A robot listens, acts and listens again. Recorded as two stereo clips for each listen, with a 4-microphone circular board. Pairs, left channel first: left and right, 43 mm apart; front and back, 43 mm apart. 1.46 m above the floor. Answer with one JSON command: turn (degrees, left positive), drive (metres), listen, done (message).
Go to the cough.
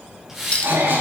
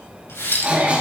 {"turn": -120}
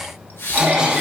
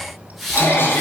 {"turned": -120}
{"turn": -15}
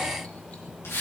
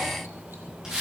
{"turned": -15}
{"listen": true}
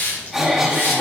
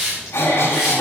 {"drive": 1.0}
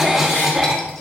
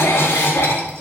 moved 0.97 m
{"drive": 1.0}
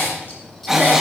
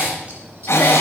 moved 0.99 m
{"turn": -10}
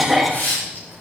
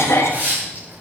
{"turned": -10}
{"drive": 1.0}
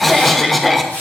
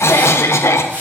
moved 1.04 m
{"drive": 1.0}
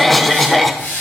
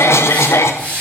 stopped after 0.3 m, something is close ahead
{"done": "Arrived at the cough, straight ahead."}